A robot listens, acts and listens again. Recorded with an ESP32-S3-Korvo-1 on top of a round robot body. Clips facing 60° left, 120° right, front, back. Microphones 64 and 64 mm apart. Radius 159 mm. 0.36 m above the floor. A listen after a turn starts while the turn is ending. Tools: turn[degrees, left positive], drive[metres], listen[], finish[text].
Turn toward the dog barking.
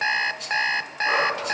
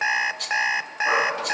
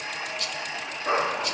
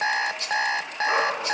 Thought: The dog barking: 50° right.
Action: turn[-50]
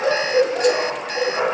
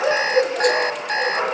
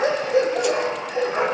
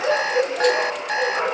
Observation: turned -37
Thought: The dog barking is now 15° right.
Action: turn[-15]
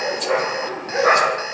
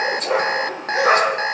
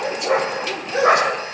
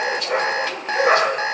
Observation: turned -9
Action: finish[Found it: a dog barking, straight ahead, over 4 m away.]